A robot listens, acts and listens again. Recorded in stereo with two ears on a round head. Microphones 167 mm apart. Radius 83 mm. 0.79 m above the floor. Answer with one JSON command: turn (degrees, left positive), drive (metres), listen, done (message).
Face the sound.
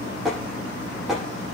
{"turn": 30}
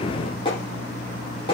{"turn": 150}
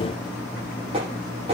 {"turn": -30}
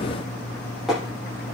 {"done": "Found it: tapping, straight ahead."}